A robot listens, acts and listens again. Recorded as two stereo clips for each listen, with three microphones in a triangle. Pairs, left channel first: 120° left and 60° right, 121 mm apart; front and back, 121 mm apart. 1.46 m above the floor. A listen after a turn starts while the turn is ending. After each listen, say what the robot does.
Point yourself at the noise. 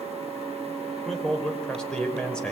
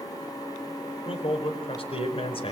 Turn 40° left.
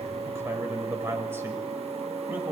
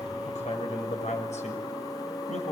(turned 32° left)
Turn 10° left.
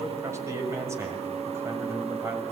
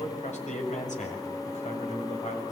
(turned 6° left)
Turn 10° left.
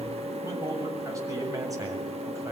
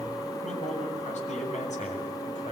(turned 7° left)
Found it: a man speaking, straight ahead.